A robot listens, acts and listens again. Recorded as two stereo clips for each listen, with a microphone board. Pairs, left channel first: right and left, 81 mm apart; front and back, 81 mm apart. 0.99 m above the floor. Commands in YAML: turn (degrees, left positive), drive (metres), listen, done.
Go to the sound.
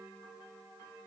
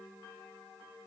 listen: true
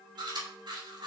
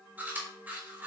turn: 115
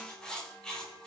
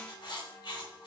turn: -10
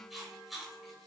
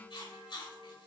drive: 1.0
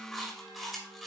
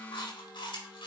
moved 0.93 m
drive: 1.0
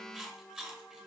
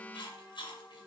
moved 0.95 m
drive: 1.0
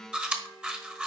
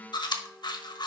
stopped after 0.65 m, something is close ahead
turn: 15
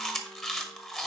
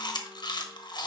done: "I am next to the chewing."